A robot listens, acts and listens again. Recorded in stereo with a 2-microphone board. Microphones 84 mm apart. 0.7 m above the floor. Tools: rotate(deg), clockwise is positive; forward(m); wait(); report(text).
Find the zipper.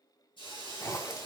rotate(-35)
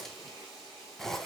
report("Found it: a zipper, straight ahead, 1 to 2 m away.")